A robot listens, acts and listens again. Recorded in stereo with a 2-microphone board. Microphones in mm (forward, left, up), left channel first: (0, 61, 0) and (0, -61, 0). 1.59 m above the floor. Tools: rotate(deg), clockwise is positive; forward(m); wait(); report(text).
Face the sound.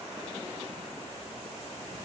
wait()
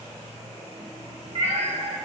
rotate(55)
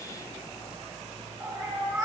rotate(30)
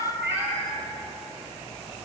rotate(20)
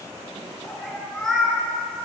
report("Found it: a cat meowing, straight ahead, 1 to 2 m away.")